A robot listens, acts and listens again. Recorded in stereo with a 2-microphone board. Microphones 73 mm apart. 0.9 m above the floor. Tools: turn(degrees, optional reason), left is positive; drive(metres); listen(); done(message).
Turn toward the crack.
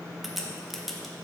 turn(degrees=30)
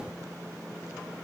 listen()
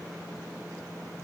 done("I heard a crack, but can't make it out now. It was about 30° right or 150° left.")